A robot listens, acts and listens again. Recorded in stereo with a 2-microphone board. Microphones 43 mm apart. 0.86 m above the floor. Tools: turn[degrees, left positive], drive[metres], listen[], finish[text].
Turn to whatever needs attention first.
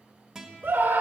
Action: turn[-90]
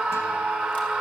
Action: finish[Facing the scream.]